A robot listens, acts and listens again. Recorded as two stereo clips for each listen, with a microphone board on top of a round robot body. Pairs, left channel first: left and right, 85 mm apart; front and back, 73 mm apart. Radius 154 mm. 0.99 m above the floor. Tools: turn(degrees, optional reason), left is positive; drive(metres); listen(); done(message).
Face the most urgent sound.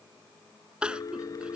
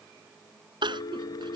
turn(degrees=-170, reason="The crying: 170° right.")
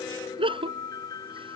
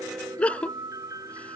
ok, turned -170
turn(degrees=-75, reason="The crying is now 75° right.")
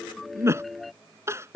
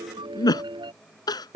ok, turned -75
turn(degrees=-30, reason="The crying is now 30° right.")
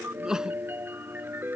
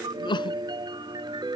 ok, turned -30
done("Facing the crying.")